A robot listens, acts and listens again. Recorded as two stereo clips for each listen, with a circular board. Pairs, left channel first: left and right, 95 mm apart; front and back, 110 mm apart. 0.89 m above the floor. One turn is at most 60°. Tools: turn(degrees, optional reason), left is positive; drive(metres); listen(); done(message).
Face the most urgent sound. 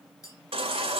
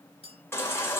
turn(degrees=-60, reason="The baby crying: 70° right.")
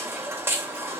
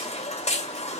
turn(degrees=-25, reason="The baby crying is now 25° right.")
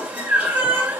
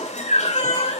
turn(degrees=-15, reason="The baby crying is now 15° right.")
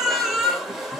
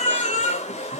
done("Found it: a baby crying, straight ahead, 2 to 4 m away.")